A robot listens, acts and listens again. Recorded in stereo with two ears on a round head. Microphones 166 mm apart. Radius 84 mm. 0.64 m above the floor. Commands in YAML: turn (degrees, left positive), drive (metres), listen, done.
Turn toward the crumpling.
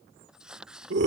turn: -30
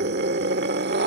listen: true
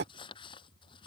turn: 25
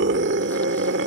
listen: true
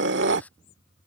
turn: 10
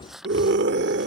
done: "Found it: crumpling, straight ahead."